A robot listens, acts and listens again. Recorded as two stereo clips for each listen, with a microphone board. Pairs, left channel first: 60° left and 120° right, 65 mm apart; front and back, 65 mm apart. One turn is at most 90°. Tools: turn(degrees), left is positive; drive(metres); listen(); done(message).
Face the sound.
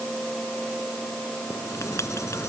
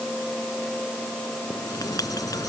turn(degrees=20)
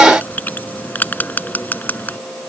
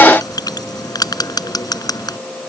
done("Facing the writing.")